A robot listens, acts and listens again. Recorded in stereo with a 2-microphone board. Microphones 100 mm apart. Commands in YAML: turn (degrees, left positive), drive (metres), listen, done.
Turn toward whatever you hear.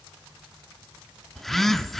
turn: 30
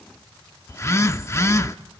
turn: 145
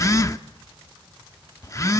turn: 40
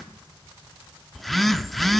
done: "Found it: a phone buzzing, straight ahead."